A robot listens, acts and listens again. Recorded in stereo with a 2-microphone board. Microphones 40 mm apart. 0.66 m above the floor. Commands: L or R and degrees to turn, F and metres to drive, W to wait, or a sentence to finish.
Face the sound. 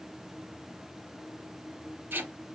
R60
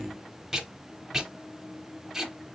R10
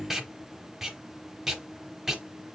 R10
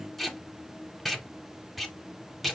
Found it: tape being pulled, straight ahead.